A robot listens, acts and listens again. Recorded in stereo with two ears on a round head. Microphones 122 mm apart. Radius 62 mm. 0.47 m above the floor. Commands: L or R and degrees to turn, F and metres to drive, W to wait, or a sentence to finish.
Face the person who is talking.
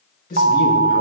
L70
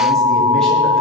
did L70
W
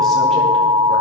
W
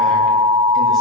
I heard a man speaking, but can't make it out now. It was about straight ahead or 40° left.